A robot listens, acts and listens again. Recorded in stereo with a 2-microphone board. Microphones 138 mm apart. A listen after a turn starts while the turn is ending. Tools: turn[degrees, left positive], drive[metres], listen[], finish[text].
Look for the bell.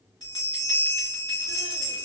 Thought: The bell: about 30° left or 150° left.
Action: turn[30]
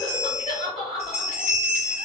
Thought: So it is at 120° left.
Action: turn[120]
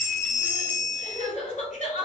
Thought: The bell is now 40° left.
Action: turn[40]
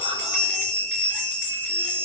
Thought: The bell is now 10° left.
Action: turn[10]
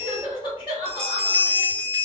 Action: finish[Found it: a bell, straight ahead, 1 to 2 m away.]